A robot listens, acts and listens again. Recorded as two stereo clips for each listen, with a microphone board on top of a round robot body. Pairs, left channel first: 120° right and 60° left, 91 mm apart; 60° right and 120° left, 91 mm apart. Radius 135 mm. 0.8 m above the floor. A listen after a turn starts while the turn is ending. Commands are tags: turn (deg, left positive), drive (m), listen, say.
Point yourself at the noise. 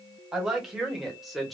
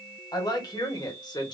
<turn deg="-30"/>
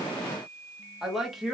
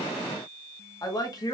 <turn deg="-30"/>
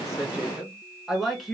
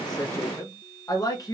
<turn deg="-35"/>
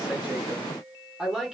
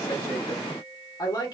<turn deg="-20"/>
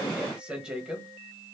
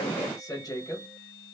<turn deg="-15"/>
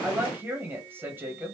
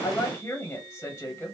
<say>Found it: a woman speaking, straight ahead, 1 to 2 m away.</say>